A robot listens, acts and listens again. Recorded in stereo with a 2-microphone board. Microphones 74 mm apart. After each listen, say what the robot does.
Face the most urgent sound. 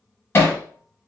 Keep listening.
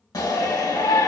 Turn 60° left.
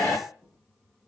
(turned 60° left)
Turn 30° left.
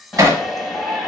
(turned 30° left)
Facing the shout, 1 to 2 m away.